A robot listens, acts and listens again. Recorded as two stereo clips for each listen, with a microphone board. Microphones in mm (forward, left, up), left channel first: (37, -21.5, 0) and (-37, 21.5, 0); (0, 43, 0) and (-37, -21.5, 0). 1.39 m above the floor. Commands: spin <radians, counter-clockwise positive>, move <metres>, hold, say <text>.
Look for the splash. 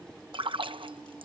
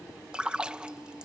spin 2.88
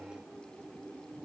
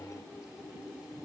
say I heard a splash from this way, but can't make it out now.